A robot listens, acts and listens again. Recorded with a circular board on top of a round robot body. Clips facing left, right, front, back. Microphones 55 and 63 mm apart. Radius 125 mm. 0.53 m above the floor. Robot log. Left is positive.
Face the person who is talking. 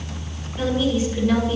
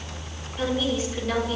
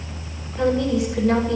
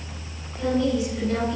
note: The woman speaking: 15° left.
cmd yaw +15
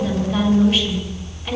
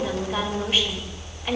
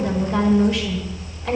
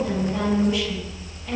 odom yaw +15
end: Facing the woman speaking, over 4 m away.